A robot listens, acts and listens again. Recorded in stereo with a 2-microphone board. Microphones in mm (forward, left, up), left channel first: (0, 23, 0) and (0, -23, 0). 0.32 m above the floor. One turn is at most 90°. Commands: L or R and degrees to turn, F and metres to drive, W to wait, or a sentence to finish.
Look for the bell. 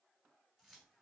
W
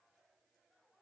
W
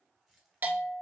R40
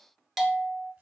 Facing the bell, 1 to 2 m away.